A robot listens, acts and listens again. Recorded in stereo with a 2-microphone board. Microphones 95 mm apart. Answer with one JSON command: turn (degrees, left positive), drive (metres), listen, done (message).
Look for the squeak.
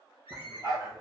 {"turn": 90}
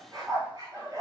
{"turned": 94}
{"listen": true}
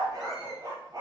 {"listen": true}
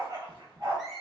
{"done": "Facing the squeak, 1 to 2 m away."}